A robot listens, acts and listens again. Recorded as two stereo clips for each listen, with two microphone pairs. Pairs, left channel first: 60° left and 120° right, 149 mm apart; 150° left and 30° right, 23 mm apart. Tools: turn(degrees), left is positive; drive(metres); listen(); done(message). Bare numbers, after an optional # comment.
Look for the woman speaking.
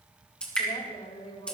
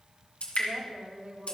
# The woman speaking: 20° left.
turn(20)
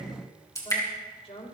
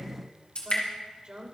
# The woman speaking is now 15° left.
turn(15)
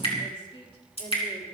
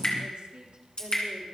done("Found it: a woman speaking, straight ahead, 2 to 4 m away.")